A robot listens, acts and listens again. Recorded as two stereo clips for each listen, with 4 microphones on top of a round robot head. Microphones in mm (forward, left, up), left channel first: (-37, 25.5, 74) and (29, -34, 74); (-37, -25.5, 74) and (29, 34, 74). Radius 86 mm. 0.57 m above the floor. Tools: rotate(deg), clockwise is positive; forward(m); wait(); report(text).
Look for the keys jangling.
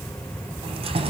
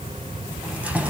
rotate(35)
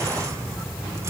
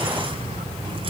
wait()
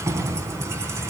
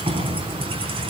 rotate(-15)
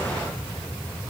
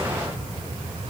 wait()
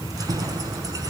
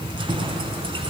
rotate(-10)
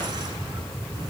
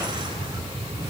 wait()
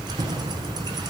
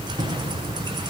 report("Found it: keys jangling, straight ahead, over 4 m away.")